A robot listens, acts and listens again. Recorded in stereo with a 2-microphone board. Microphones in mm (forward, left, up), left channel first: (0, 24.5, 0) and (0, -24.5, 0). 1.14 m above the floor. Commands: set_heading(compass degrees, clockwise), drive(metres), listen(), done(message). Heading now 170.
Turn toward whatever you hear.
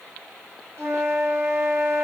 set_heading(230)
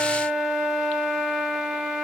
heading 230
set_heading(240)
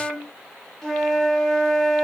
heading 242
done("Found it: a flute, straight ahead.")